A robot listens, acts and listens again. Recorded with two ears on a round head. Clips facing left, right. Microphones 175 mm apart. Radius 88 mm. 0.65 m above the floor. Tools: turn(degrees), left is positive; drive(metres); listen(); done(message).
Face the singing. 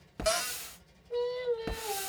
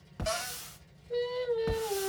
turn(degrees=-30)
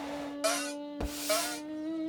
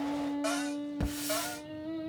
turn(degrees=-30)
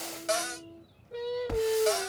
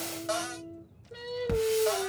turn(degrees=-30)
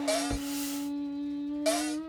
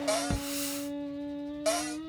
turn(degrees=-140)
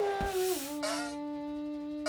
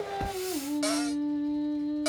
done("Facing the singing.")